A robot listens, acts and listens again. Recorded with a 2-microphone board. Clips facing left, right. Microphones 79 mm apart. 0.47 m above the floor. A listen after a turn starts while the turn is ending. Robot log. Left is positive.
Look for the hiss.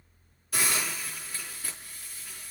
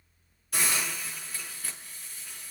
cmd yaw +30
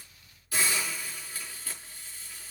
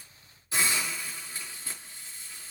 note: So it is at 25° right.
cmd yaw -25
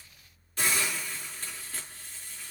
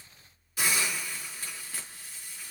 end: Facing the hiss, over 4 m away.